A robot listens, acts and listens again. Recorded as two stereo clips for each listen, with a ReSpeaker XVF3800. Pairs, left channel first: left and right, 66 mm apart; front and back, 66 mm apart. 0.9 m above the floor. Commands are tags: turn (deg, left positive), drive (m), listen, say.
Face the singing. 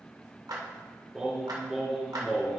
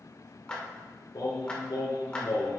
<say>Found it: singing, straight ahead, 2 to 4 m away.</say>